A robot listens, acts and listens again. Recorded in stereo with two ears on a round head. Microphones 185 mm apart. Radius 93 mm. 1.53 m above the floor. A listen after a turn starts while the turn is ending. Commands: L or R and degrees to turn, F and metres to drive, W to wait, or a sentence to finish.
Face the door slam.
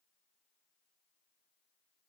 W
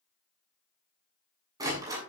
R20
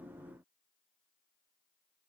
W
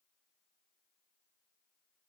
I heard a door slam, but can't make it out now. It was about straight ahead or 140° right.